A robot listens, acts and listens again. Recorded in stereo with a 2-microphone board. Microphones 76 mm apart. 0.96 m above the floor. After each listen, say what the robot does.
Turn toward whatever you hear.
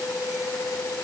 Keep listening.
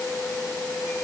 Keep listening.
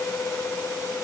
I can't make out anything.